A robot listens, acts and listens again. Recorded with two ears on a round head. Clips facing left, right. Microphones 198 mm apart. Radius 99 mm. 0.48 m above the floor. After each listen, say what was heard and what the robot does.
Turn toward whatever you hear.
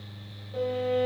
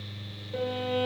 The violin: about 65° right or 115° right. Turn 65° right.
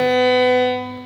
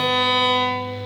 So it is at 15° right. Turn 15° right.
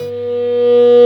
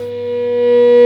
Facing the violin.